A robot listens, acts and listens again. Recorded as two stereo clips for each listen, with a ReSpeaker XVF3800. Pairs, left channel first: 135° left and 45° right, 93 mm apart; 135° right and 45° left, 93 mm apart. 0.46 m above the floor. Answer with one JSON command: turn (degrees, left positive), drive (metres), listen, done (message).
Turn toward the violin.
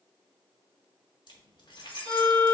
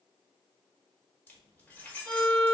{"turn": -65}
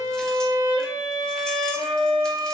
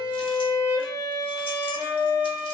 {"done": "Found it: a violin, straight ahead, 1 to 2 m away."}